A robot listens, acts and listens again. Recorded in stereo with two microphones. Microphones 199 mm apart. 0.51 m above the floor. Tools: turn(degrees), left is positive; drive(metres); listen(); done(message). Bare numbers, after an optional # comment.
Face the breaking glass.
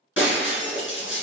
turn(90)
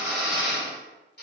done("I heard breaking glass from this way, but can't make it out now.")